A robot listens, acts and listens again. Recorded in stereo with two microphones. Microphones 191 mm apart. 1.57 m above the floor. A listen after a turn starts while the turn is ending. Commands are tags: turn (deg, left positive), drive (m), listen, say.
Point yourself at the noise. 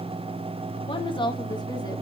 <turn deg="25"/>
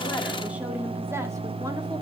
<listen/>
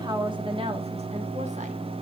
<turn deg="-30"/>
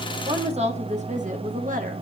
<turn deg="-45"/>
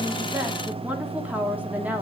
<turn deg="-10"/>
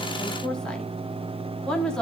<say>Found it: a woman speaking, straight ahead, 1 to 2 m away.</say>